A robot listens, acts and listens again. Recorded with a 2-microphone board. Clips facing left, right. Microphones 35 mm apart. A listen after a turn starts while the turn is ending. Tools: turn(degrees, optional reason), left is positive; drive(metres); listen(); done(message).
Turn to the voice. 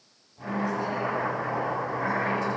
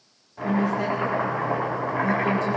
turn(degrees=-70, reason="The woman speaking: about 70° right or 110° right.")
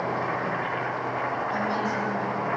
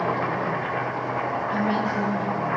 listen()
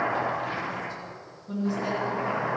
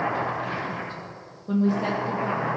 turn(degrees=-40, reason="So it is at 40° right.")
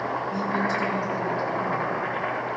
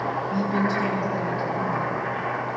turn(degrees=-10, reason="The woman speaking is now 10° right.")
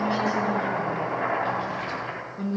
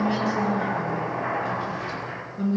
done("Facing the woman speaking, 2 to 4 m away.")